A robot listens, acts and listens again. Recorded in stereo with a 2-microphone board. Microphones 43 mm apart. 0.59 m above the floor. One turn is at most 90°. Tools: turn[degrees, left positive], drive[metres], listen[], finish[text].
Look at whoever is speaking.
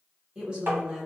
Thought: The woman speaking: about 20° right or 160° right.
Action: turn[-20]
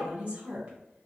Thought: So it is at 135° right.
Action: turn[-90]
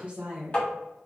Thought: The woman speaking is now 30° right.
Action: turn[-30]
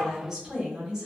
Thought: The woman speaking is now 15° right.
Action: turn[-15]
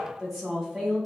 Action: finish[Found it: a woman speaking, straight ahead.]